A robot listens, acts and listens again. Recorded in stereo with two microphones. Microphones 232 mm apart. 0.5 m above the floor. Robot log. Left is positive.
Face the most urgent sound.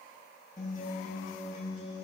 cmd idle
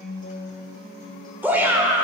cmd yaw -30
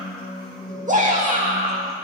note: So it is at 140° right.
cmd yaw -140
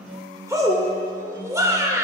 note: The shout is now 15° right.
cmd yaw -15
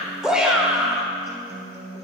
end: Facing the shout.